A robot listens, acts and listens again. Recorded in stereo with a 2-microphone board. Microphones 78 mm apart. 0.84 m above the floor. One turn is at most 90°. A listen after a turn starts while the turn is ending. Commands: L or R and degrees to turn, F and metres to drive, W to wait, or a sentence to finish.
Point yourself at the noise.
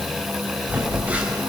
R20
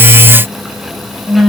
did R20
Facing the phone buzzing, over 4 m away.